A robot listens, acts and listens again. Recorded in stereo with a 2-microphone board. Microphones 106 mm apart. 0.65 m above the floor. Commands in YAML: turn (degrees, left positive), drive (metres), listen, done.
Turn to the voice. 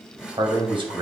turn: -55
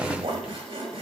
turn: -70
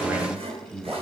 turn: -20
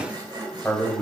done: "Facing the man speaking."